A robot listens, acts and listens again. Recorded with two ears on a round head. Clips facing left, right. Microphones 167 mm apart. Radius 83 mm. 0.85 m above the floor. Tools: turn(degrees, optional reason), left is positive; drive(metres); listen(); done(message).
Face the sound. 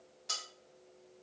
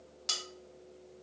turn(degrees=-90)
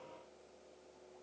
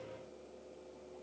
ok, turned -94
listen()
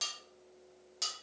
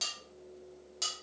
done("Facing the cutlery clinking.")